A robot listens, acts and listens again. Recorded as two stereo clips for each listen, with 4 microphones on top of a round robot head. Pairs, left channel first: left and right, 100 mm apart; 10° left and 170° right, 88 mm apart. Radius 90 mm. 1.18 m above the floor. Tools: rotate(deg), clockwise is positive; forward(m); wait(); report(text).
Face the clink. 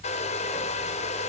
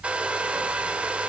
wait()
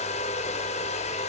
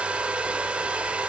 wait()
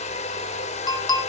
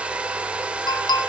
rotate(-45)
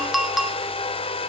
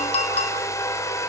report("Facing the clink, 2 to 4 m away.")